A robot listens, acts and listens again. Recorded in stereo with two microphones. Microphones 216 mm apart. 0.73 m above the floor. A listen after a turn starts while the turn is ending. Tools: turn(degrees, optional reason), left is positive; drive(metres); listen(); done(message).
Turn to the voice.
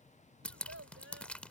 turn(degrees=-90)
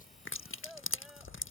done("Facing the child speaking.")